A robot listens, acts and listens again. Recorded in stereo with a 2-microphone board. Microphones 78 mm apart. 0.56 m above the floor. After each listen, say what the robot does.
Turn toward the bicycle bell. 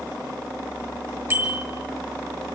Turn 30° right.
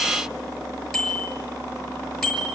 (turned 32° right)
Facing the bicycle bell.